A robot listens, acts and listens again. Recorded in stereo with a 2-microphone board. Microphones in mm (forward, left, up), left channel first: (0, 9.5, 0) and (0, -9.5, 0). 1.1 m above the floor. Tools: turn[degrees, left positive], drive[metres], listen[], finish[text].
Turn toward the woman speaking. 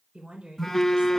Thought: The woman speaking: about 70° right or 110° right.
Action: turn[-70]
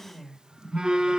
Action: finish[Facing the woman speaking.]